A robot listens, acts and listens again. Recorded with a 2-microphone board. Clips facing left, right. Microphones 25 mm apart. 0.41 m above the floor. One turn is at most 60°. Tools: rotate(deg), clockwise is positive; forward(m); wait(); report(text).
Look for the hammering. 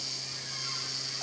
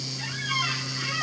wait()
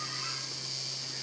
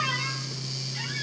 wait()
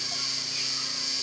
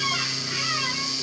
report("I can't make out hammering.")